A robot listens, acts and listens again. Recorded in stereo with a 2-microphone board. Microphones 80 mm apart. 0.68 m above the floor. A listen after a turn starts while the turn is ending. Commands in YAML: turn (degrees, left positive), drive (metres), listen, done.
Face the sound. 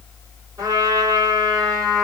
turn: -40
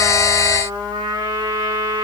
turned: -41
turn: -100
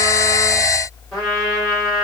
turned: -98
done: "Facing the trumpet, 2 to 4 m away."